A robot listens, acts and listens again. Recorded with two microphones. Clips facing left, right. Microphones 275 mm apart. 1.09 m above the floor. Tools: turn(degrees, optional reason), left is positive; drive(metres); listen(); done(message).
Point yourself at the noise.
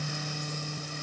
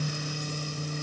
listen()
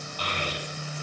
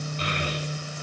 turn(degrees=-30, reason="The child speaking: about 30° right or 150° right.")
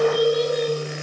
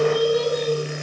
turn(degrees=-115, reason="So it is at 115° right.")
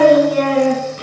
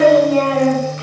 turn(degrees=40, reason="The child speaking is now 40° left.")
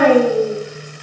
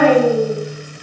turn(degrees=20, reason="The child speaking is now 20° left.")
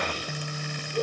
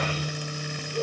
done("Facing the child speaking.")